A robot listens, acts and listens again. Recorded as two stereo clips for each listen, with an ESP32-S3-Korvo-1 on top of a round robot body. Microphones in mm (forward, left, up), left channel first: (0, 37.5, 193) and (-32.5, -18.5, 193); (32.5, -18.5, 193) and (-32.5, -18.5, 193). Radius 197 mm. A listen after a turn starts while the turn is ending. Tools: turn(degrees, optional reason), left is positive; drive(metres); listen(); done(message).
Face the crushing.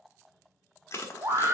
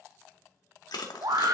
turn(degrees=10, reason="The crushing: 10° left.")
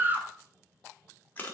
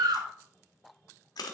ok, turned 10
done("Facing the crushing, 1 to 2 m away.")